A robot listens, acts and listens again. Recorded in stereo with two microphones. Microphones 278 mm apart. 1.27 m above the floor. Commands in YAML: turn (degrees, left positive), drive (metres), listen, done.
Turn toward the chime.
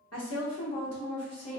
listen: true
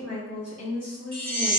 turn: -50
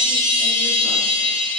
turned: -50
done: "Facing the chime, 1 to 2 m away."